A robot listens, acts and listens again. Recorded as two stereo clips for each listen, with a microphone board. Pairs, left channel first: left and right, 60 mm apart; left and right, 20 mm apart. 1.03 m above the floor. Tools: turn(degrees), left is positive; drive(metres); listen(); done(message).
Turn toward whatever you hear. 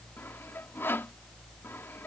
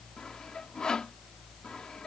turn(degrees=40)
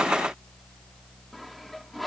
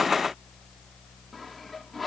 done("Facing the sawing.")